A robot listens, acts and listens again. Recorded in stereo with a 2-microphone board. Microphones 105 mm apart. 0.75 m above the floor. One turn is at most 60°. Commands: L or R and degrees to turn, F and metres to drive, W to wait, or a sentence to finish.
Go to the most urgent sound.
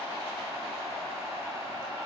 W
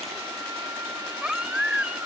R30
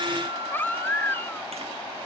L20
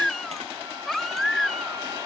F1.0
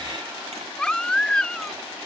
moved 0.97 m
L10
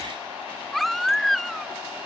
F1.0
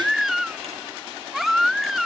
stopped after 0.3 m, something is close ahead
Arrived at the baby crying, straight ahead.